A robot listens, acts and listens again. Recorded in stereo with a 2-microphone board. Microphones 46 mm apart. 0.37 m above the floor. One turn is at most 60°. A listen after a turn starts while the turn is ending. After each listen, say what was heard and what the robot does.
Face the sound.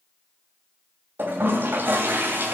The toilet flushing: about 50° right or 130° right. Turn 50° right.
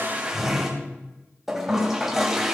So it is at 10° right. Turn 10° right.
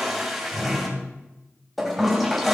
Facing the toilet flushing.